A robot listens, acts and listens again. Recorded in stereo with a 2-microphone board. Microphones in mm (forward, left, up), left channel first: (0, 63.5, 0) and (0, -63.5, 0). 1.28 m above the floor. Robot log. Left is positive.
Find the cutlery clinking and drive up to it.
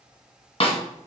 cmd idle
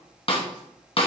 cmd idle
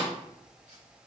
end: I can't make out cutlery clinking to turn to.